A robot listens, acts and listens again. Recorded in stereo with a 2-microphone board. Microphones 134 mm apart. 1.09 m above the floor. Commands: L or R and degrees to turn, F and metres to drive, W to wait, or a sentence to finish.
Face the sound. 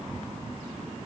W
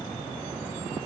W
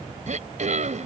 R65
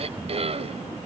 R50
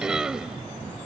Facing the throat clearing.